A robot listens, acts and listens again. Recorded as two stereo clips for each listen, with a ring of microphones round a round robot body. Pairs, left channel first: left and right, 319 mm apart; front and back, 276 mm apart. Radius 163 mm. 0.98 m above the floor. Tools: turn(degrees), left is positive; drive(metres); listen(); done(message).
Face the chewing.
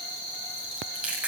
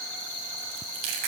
turn(degrees=-175)
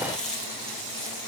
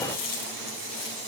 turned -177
done("Found it: chewing, straight ahead.")